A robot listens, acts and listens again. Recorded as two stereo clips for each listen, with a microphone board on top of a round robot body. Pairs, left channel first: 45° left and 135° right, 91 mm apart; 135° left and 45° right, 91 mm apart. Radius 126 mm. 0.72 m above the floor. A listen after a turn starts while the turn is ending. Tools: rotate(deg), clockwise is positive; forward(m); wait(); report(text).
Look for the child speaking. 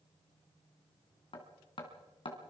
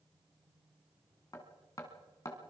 wait()
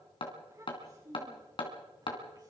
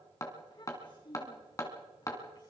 rotate(-170)
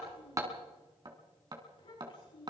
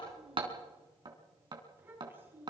rotate(-20)
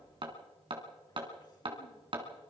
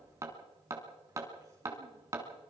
wait()
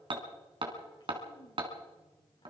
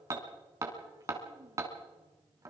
wait()
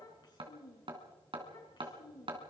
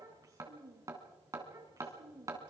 report("Facing the child speaking, over 4 m away.")